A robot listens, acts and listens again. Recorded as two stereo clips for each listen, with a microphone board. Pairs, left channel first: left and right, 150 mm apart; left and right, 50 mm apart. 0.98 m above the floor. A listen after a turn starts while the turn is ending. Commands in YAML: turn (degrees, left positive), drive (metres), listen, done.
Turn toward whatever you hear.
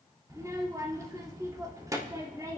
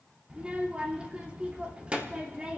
turn: -20
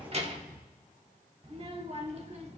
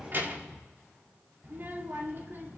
turn: -140
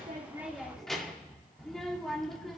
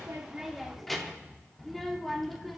done: "Facing the child speaking, 1 to 2 m away."